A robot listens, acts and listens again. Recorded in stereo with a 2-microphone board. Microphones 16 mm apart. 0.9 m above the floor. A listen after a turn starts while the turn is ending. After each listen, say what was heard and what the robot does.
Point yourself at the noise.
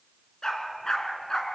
The dog barking: about 45° left or 135° left. Turn 45° left.
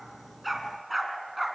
Found it: a dog barking, straight ahead, 2 to 4 m away.